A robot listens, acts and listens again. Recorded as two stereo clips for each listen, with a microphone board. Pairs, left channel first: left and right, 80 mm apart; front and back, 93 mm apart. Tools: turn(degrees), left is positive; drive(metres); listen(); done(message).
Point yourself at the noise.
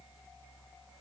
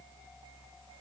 listen()
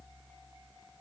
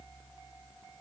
listen()
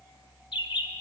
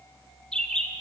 turn(degrees=80)
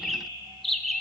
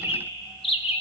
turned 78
done("Facing the bird, under 1 m away.")